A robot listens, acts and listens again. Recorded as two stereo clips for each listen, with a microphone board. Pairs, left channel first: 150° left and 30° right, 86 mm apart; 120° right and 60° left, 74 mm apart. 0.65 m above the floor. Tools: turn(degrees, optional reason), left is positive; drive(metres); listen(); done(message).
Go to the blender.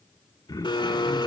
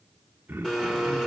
turn(degrees=160, reason="The blender: 160° left.")
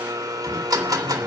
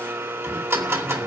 turn(degrees=10, reason="The blender is now 10° left.")
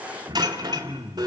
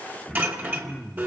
drive(metres=1.0)
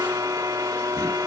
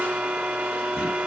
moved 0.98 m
drive(metres=1.0)
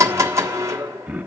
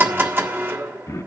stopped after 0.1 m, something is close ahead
turn(degrees=15, reason="The blender is now 15° left.")
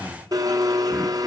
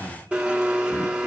done("Arrived at the blender, straight ahead.")